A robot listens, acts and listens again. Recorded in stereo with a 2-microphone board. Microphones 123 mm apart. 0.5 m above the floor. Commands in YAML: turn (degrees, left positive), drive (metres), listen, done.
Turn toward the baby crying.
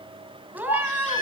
turn: 90
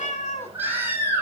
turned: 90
turn: -15
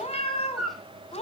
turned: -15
done: "Found it: a baby crying, straight ahead, over 4 m away."